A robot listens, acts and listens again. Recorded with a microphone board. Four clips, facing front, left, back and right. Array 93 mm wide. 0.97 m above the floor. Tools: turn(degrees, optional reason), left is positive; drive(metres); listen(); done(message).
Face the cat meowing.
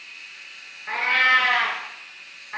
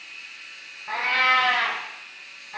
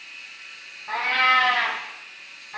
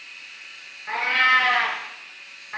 turn(degrees=-45, reason="The cat meowing: 45° right.")
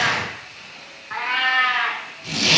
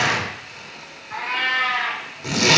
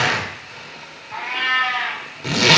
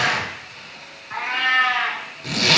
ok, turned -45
turn(degrees=-30, reason="The cat meowing is now 30° right.")
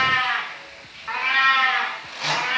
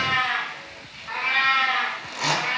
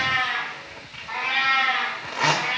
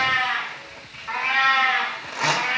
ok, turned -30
turn(degrees=-25, reason="The cat meowing is now 25° right.")
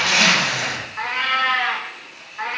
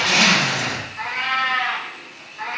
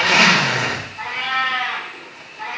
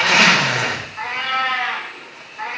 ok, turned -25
turn(degrees=-10, reason="The cat meowing is now 10° right.")
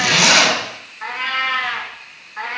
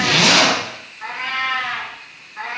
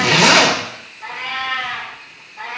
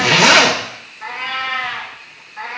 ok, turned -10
done("Facing the cat meowing, 1 to 2 m away.")